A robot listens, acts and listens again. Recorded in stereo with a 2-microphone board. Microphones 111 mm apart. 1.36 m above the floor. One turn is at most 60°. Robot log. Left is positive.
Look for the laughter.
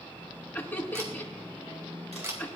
note: The laughter: about 20° left or 160° left.
cmd yaw +20
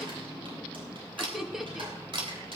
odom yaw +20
end: Facing the laughter.